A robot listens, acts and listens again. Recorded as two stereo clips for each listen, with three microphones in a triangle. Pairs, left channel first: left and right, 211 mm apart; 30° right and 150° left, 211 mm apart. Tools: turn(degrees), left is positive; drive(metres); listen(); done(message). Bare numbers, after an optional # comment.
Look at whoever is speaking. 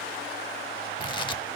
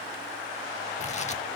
listen()
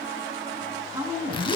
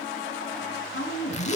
# The woman speaking: 15° right.
turn(-15)
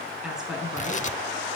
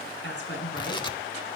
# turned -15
done("Facing the woman speaking, over 4 m away.")